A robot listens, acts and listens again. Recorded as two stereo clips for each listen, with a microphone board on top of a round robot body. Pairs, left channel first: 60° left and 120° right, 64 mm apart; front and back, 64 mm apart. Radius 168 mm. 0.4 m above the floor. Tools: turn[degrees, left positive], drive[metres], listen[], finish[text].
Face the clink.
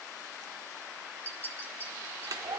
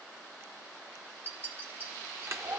Thought: The clink: 120° left.
Action: turn[120]
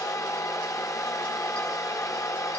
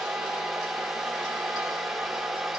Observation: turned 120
Action: listen[]
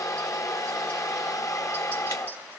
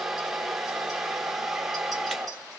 Action: listen[]
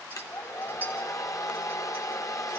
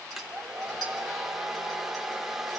Action: finish[Facing where the clink came from. I can't hear it now.]